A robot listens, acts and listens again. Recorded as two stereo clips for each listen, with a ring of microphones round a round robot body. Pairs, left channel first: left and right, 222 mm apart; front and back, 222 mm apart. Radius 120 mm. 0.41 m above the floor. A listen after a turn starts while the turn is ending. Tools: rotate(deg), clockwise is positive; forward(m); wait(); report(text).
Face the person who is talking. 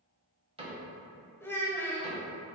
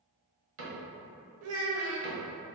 rotate(-170)
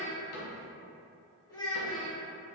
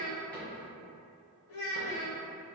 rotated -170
rotate(-15)
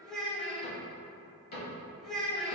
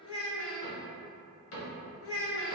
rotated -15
report("Facing the child speaking.")